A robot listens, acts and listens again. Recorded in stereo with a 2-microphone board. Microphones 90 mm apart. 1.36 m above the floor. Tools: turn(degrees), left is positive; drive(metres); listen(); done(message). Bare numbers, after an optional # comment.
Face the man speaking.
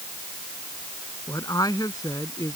# The man speaking: about 40° left or 140° left.
turn(40)
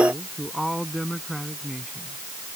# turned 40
done("Facing the man speaking.")